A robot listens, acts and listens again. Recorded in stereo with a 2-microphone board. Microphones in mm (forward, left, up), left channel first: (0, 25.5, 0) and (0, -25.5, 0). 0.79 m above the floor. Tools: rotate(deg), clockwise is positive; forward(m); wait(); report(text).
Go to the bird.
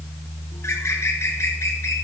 rotate(-60)
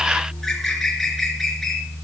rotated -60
forward(1.0)
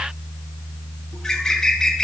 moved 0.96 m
rotate(-10)
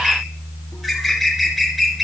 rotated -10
forward(1.0)
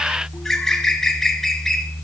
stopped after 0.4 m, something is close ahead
rotate(-10)
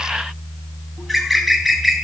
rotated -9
report("I am next to the bird.")